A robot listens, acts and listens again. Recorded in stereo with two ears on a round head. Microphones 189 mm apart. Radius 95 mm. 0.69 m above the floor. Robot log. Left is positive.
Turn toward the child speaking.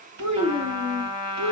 cmd yaw -90
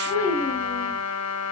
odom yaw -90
note: So it is at 15° left.
cmd yaw +15
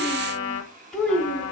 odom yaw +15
end: Found it: a child speaking, straight ahead, 2 to 4 m away.